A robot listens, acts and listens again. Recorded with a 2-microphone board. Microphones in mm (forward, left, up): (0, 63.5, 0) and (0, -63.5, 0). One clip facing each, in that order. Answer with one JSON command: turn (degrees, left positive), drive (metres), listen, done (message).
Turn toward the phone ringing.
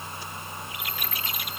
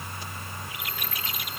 {"listen": true}
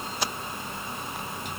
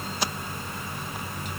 {"listen": true}
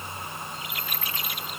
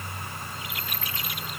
{"done": "I can't make out a phone ringing to turn to."}